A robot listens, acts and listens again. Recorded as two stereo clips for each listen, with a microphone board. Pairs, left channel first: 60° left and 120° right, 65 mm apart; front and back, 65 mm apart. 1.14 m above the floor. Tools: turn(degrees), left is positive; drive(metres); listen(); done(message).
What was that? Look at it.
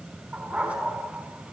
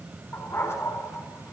turn(degrees=-50)
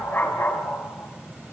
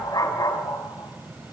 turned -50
done("Found it: a dog barking, straight ahead.")